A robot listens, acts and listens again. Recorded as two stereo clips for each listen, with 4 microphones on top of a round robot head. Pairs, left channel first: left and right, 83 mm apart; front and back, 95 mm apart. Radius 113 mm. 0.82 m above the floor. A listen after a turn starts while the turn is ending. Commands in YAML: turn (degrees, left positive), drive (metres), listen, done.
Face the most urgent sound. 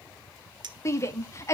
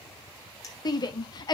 turn: 40
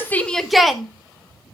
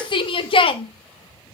done: "Found it: a shout, straight ahead, 2 to 4 m away."